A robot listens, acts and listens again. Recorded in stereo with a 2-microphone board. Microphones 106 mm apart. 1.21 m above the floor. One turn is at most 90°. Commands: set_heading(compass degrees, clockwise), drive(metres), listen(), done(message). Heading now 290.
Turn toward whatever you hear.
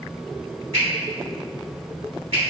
set_heading(0)
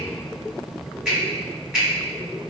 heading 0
done("Facing the finger snap.")